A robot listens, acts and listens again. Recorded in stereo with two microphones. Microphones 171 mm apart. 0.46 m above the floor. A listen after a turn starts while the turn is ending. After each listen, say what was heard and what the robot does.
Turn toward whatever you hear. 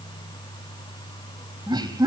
The laughter: about 25° right or 155° right. Turn 25° right.
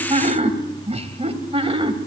The laughter: about 30° right or 150° right. Turn 30° right.
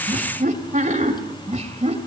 So it is at 140° right. Turn 140° right.
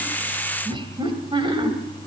The laughter is now 30° right. Turn 30° right.
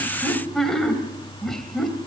Found it: laughter, straight ahead, 2 to 4 m away.